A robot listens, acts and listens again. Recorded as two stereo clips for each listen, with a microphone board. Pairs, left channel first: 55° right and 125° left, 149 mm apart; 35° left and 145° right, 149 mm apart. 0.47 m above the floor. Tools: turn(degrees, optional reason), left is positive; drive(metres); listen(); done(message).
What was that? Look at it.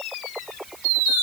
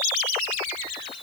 listen()
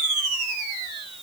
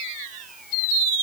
listen()
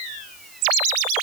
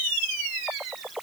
done("I can't make out anything.")